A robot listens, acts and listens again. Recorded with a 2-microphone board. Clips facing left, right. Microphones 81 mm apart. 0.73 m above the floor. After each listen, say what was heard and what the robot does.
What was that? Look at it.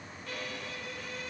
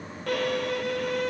The violin: about 70° right or 110° right. Turn 70° right.
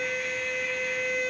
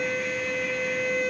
Facing the violin.